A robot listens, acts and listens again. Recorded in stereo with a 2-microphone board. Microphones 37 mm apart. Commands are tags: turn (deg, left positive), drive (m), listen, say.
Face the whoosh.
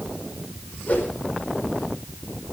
<turn deg="50"/>
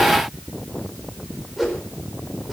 <say>Facing the whoosh, over 4 m away.</say>